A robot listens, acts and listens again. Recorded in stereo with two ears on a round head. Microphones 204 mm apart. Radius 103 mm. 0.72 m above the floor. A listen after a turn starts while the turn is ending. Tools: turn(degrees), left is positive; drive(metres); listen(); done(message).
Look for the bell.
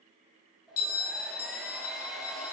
turn(degrees=65)
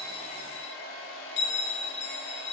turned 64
turn(degrees=50)
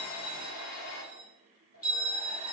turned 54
done("Facing the bell.")